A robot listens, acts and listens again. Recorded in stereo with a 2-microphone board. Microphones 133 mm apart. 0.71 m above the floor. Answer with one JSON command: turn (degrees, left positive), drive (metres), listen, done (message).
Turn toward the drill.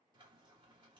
{"listen": true}
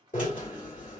{"turn": 70}
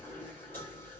{"turn": 15}
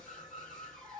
{"done": "Found it: a drill, straight ahead."}